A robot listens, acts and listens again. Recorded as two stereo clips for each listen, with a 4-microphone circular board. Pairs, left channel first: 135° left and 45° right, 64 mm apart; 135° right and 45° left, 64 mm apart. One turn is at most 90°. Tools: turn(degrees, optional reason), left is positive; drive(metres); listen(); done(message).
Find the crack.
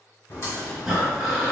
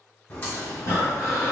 turn(degrees=90, reason="The crack: 170° left.")
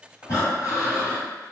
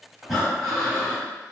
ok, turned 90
turn(degrees=80, reason="Nothing new. It was at 80° left.")
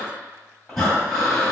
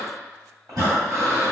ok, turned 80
done("Facing where the crack came from. I can't hear it now.")